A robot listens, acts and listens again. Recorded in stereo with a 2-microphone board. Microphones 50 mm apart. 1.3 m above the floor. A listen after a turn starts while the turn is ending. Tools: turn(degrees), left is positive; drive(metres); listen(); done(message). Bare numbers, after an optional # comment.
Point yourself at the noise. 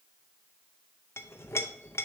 # The clink: about 60° left or 120° left.
turn(60)
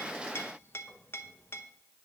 # So it is at 55° left.
turn(55)
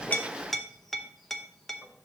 done("Found it: a clink, straight ahead.")